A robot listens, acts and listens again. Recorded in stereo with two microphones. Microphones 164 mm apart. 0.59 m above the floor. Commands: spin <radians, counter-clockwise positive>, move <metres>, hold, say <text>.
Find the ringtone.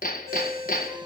spin 0.26
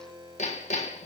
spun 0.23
spin 2.62
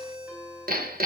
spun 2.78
spin -0.17
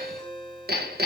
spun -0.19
say Found it: a ringtone, straight ahead.